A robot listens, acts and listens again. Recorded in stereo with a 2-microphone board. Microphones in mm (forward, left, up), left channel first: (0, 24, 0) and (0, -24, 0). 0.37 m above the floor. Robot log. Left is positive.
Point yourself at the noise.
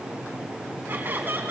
note: The laughter: about 50° right or 130° right.
cmd yaw -50
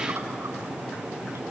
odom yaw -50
cmd idle
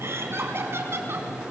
note: So it is at 60° right.
cmd yaw -60
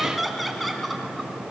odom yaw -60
end: Found it: laughter, straight ahead, 2 to 4 m away.